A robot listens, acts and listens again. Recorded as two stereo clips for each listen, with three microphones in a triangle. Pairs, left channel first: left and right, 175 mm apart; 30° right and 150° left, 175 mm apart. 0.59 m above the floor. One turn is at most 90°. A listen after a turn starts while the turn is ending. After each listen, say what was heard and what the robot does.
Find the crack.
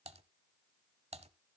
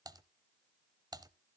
Keep listening.
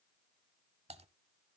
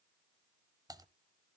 Keep listening.
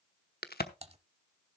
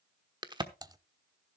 The crack: 90° left. Turn 90° left.
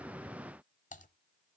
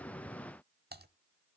I heard a crack from this way, but can't make it out now.